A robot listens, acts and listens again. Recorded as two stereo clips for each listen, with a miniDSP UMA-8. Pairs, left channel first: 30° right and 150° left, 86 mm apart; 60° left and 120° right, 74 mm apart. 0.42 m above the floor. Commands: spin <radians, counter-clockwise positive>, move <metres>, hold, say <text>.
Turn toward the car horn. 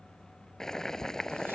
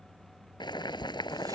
hold
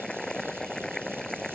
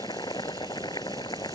hold
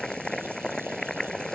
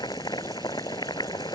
say I can't make out a car horn, only boiling.